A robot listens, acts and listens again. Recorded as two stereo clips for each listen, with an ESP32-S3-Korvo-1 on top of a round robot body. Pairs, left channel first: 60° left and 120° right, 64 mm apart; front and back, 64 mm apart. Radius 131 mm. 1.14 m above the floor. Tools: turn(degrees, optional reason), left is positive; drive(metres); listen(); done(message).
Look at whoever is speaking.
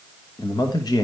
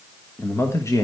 turn(degrees=40, reason="The man speaking: 40° left.")
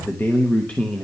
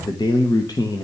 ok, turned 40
turn(degrees=-15, reason="The man speaking is now 15° right.")
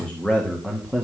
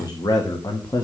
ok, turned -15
turn(degrees=-25, reason="The man speaking is now 25° right.")
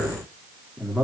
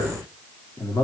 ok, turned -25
turn(degrees=-20, reason="The man speaking is now 20° right.")
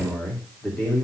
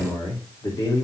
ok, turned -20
turn(degrees=-15, reason="The man speaking is now 15° right.")
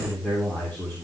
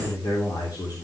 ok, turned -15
done("Facing the man speaking.")